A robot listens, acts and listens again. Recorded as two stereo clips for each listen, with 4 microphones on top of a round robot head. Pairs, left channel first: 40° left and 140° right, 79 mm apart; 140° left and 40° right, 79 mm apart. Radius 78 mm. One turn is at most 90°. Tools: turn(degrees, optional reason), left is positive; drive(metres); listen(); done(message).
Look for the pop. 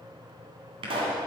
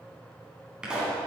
turn(degrees=-90, reason="The pop: 120° right.")
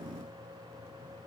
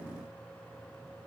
turn(degrees=-30, reason="Nothing new. It was at 30° right.")
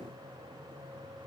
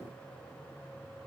done("Facing where the pop came from. I can't hear it now.")